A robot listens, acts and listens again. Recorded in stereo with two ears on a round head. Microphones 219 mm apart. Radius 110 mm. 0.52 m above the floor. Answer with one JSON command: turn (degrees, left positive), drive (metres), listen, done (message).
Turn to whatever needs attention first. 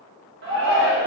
{"turn": -50}
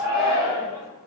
{"turn": -15}
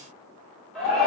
{"done": "Facing the shout, 1 to 2 m away."}